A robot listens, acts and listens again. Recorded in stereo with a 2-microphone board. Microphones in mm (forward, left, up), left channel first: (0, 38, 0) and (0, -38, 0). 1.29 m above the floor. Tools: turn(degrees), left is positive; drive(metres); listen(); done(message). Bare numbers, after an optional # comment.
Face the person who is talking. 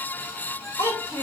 # The child speaking: about 40° left or 140° left.
turn(40)
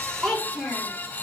done("Facing the child speaking.")